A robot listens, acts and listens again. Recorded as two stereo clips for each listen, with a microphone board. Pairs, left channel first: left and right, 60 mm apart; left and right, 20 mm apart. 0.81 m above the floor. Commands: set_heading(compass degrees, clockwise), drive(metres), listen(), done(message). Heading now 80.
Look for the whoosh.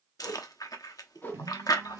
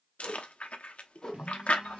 set_heading(45)
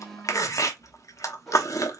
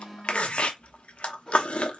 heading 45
done("Facing the whoosh.")